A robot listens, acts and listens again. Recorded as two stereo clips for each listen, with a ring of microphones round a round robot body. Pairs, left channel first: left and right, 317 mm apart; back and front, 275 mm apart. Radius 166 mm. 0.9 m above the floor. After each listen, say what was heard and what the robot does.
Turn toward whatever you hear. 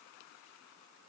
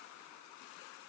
Keep listening.
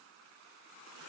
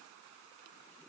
Keep listening.
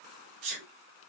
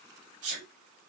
The sneeze: 65° right. Turn 65° right.
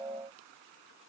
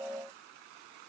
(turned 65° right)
Facing where the sneeze came from. I can't hear it now.